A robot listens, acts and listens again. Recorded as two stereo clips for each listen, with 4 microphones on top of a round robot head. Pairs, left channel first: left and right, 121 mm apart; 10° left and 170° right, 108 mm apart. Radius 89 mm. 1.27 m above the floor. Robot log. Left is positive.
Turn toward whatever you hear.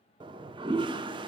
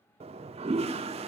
note: The toilet flushing: 140° right.
cmd yaw -140
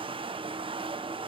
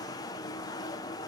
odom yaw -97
note: The toilet flushing is now 45° right.
cmd yaw -45
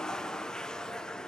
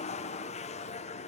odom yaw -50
end: Facing the toilet flushing, under 1 m away.